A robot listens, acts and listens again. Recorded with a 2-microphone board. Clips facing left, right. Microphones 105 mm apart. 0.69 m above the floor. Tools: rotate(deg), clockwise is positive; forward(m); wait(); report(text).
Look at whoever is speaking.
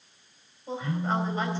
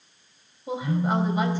rotate(30)
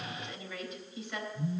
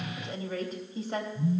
rotate(140)
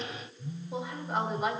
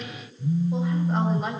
report("Found it: a woman speaking, straight ahead, 2 to 4 m away.")